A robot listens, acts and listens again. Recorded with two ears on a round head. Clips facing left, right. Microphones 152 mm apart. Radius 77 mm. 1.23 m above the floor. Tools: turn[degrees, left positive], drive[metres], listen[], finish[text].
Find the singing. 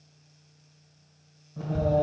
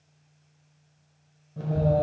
Thought: The singing: about 25° right or 155° right.
Action: turn[-25]
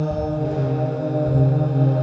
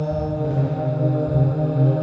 Thought: The singing: about 20° right or 160° right.
Action: turn[-20]
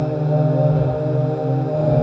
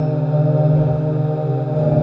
Action: turn[-30]
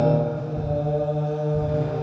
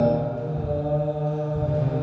Thought: So it is at 15° left.
Action: turn[15]
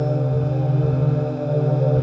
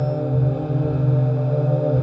Action: finish[Facing the singing.]